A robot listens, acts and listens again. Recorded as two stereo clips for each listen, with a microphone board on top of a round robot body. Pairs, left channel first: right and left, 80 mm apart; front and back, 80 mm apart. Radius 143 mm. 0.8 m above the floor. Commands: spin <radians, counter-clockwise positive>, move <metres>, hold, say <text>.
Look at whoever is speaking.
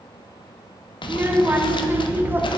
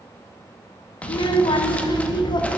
spin 0.44
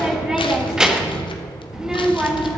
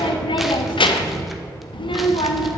say Found it: a child speaking, straight ahead.